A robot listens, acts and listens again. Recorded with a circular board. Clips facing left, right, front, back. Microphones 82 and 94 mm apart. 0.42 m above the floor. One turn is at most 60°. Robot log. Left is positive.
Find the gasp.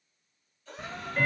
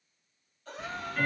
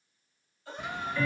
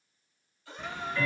note: The gasp: 55° right.
cmd yaw -55
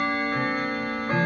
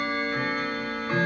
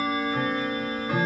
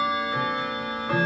end: Facing where the gasp came from. I can't hear it now.